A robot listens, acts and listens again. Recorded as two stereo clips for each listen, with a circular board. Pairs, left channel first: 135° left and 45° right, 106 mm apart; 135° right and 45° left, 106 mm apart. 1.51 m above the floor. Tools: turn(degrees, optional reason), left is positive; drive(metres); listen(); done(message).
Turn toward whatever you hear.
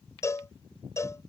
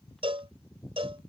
turn(degrees=75, reason="The cowbell: 75° left.")
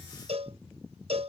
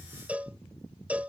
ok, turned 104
turn(degrees=-30, reason="The cowbell is now 30° right.")
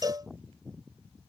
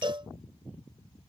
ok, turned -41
turn(degrees=10, reason="The cowbell is now 10° left.")
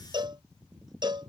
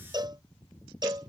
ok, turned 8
done("Found it: a cowbell, straight ahead.")